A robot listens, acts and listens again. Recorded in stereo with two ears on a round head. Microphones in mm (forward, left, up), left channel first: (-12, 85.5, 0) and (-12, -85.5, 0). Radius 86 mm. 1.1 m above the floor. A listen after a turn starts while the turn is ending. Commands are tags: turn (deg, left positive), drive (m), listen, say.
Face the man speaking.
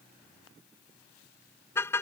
<listen/>
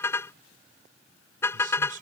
<turn deg="-50"/>
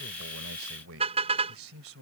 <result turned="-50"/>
<turn deg="-80"/>
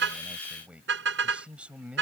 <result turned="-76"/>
<say>Facing the man speaking.</say>